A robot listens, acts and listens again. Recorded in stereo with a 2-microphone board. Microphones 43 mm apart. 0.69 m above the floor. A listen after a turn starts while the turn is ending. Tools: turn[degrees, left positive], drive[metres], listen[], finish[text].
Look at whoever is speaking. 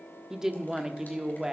Action: turn[-30]
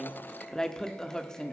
Thought: So it is at 15° left.
Action: turn[15]
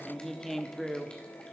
Thought: The woman speaking is now 10° left.
Action: turn[10]
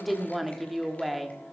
Action: finish[Found it: a woman speaking, straight ahead.]